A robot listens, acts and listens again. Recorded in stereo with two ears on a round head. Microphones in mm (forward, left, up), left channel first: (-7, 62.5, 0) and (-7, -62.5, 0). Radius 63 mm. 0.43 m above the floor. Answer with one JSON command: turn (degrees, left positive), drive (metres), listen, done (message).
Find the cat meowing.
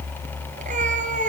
{"turn": -60}
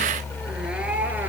{"listen": true}
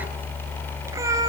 {"listen": true}
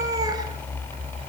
{"turn": -25}
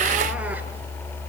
{"listen": true}
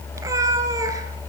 {"turn": -25}
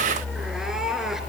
{"done": "Found it: a cat meowing, straight ahead, 2 to 4 m away."}